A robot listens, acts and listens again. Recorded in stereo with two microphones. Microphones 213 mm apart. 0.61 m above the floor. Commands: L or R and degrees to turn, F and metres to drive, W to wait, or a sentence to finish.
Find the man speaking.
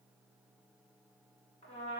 W
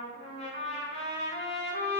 W
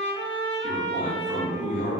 R30
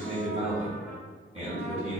R150
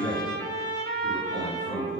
R70
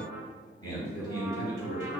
L15
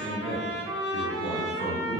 Found it: a man speaking, straight ahead.